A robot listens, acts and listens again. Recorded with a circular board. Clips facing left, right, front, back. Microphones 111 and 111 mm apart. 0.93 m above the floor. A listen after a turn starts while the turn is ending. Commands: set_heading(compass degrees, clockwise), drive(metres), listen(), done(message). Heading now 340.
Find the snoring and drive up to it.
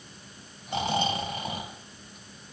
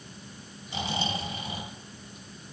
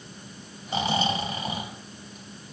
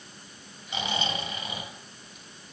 set_heading(285)
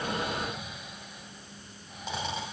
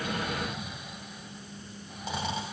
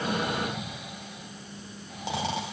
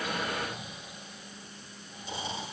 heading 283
drive(1.0)
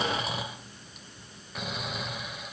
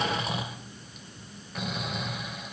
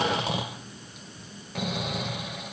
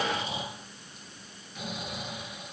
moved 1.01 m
drive(1.0)
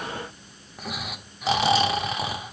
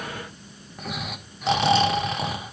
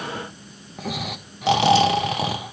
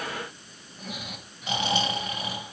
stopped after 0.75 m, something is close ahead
done("Arrived at the snoring, straight ahead.")